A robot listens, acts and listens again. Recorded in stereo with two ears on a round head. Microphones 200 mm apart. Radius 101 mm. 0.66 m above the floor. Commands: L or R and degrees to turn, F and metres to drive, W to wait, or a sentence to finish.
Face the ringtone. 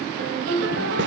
R50
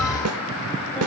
W
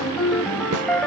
Found it: a ringtone, straight ahead.